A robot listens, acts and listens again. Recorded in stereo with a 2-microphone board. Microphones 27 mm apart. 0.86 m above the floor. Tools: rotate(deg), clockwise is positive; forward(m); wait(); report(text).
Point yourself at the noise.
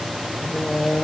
rotate(-90)
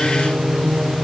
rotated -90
rotate(35)
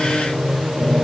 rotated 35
rotate(20)
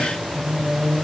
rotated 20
rotate(10)
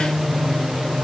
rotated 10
report("Found it: singing, straight ahead.")